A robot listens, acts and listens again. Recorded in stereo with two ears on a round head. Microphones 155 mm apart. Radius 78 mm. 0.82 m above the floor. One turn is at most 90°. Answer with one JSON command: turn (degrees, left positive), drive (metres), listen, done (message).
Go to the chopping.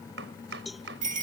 {"turn": -90}
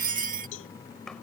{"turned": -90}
{"drive": 1.0}
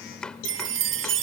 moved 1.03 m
{"drive": 1.0}
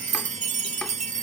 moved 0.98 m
{"listen": true}
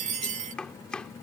{"drive": 1.0}
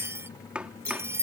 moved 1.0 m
{"drive": 1.0}
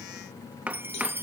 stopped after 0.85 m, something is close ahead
{"turn": -10}
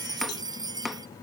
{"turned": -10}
{"done": "Arrived at the chopping, straight ahead."}